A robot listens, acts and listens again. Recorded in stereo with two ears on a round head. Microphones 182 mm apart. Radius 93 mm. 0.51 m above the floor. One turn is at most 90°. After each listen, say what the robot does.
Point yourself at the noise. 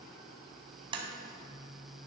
Turn 25° right.
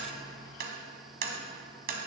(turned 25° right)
Turn 90° right.
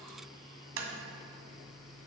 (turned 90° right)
Turn 70° right.
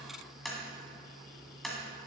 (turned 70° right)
Found it: tapping, straight ahead.